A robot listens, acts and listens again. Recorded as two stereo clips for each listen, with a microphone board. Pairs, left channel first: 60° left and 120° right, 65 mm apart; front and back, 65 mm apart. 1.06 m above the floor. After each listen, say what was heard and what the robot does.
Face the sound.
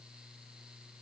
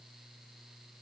Keep listening.
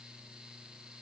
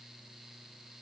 Keep listening.
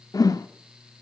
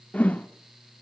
The whoosh: 65° left. Turn 65° left.
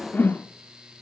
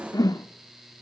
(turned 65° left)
Facing the whoosh, 1 to 2 m away.